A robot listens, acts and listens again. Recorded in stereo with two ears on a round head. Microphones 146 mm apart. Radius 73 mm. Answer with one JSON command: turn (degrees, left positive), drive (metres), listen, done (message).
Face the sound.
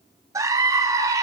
{"turn": -20}
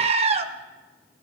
{"turn": -140}
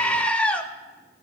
{"done": "Facing the scream, 1 to 2 m away."}